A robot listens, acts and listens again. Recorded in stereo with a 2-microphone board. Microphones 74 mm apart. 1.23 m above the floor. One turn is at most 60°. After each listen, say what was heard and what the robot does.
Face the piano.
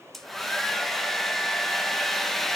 Keep listening.
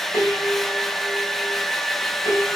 The piano: about 45° left or 135° left. Turn 45° left.
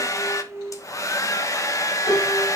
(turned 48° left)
So it is at 90° left. Turn 60° left.
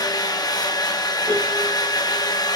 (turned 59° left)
Nothing new. It was at 30° left. Turn 30° left.
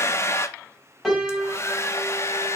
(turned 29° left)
Facing the piano.